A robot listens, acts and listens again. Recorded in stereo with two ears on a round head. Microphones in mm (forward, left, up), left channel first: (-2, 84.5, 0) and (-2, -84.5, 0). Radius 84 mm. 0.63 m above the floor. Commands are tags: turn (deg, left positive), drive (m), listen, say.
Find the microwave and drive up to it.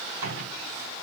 <turn deg="-75"/>
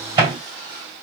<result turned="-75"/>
<turn deg="-25"/>
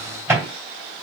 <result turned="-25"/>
<turn deg="-10"/>
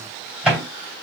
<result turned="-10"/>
<drive m="1.0"/>
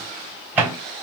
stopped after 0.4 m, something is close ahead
<turn deg="-10"/>
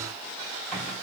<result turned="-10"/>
<listen/>
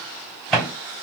<say>Blocked. The microwave is further on, straight ahead.</say>